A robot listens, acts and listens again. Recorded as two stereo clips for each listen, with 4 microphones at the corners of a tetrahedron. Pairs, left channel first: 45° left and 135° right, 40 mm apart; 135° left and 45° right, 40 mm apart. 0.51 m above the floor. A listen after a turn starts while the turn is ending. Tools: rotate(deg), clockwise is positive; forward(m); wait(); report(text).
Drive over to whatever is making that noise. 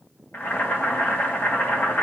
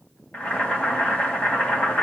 rotate(-80)
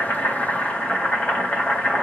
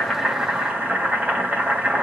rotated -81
forward(1.0)
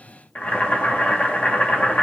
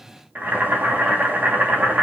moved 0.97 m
forward(1.0)
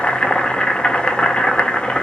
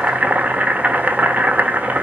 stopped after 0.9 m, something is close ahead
rotate(10)
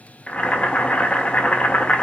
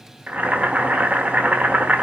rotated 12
report("I am next to the boiling.")